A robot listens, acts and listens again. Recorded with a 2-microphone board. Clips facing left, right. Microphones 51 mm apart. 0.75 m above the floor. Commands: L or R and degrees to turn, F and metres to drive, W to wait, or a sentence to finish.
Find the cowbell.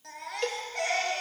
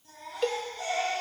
L30
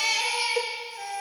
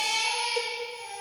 L145
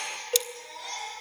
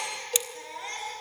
L40
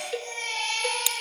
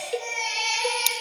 Found it: a cowbell, straight ahead, 1 to 2 m away.